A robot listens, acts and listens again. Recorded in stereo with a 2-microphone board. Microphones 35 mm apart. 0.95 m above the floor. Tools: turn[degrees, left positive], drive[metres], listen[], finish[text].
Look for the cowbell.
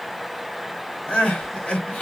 Action: listen[]
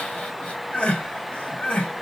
Action: listen[]
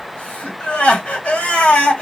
Action: finish[I can't make out a cowbell to turn to.]